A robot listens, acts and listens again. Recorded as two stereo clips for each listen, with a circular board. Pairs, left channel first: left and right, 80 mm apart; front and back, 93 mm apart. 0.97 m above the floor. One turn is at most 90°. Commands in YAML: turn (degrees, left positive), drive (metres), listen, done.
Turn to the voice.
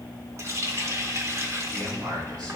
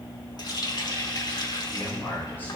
turn: -70
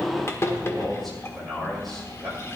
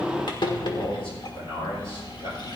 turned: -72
done: "Found it: a man speaking, straight ahead."